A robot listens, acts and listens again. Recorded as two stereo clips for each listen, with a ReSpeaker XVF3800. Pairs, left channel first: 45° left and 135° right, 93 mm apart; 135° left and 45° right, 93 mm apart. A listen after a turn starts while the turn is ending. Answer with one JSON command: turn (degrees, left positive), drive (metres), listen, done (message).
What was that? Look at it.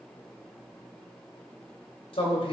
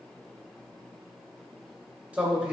{"turn": 30}
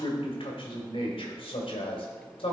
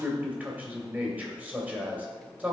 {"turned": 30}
{"turn": 30}
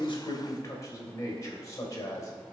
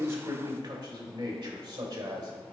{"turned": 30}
{"turn": -10}
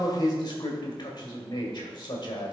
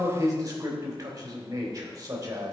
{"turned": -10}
{"done": "Facing the man speaking."}